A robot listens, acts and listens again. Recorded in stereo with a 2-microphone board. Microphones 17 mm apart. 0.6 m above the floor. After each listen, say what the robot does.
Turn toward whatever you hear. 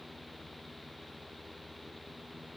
Keep listening.
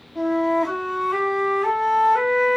Turn 30° left.
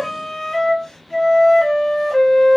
Turn 145° left.
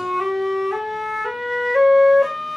Turn 15° right.
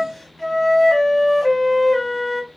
Facing the flute.